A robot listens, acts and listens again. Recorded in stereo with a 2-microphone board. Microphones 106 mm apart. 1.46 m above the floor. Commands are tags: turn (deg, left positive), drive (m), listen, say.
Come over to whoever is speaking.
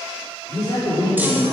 <turn deg="40"/>
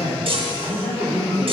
<turn deg="100"/>
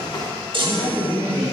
<turn deg="30"/>
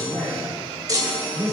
<turn deg="10"/>
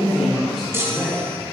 <drive m="1.0"/>
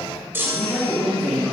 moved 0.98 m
<drive m="1.0"/>
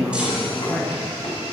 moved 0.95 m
<drive m="1.0"/>
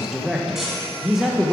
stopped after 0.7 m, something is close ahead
<say>I am next to the man speaking.</say>